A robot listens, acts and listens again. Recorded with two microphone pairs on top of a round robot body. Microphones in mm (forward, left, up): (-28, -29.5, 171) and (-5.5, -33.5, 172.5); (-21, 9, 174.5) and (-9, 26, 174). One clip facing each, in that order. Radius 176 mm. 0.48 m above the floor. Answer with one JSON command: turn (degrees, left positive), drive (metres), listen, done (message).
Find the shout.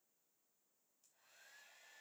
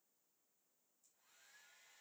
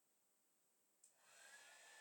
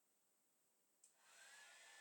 {"listen": true}
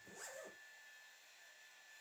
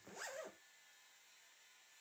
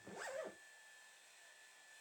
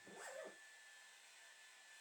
{"listen": true}
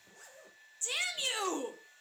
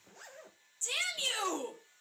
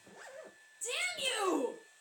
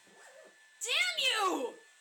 {"turn": 85}
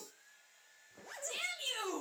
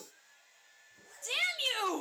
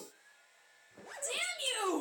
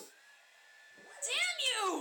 {"done": "Found it: a shout, straight ahead, 2 to 4 m away."}